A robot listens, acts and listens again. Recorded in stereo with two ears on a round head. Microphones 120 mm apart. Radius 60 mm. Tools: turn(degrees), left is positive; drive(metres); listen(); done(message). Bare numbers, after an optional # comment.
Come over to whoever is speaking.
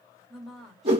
turn(30)
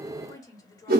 # So it is at 150° left.
turn(150)
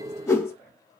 # The woman speaking is now 20° left.
turn(20)
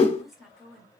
drive(1.0)
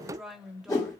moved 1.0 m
drive(1.0)
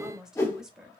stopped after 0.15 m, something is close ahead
done("I am next to the woman speaking.")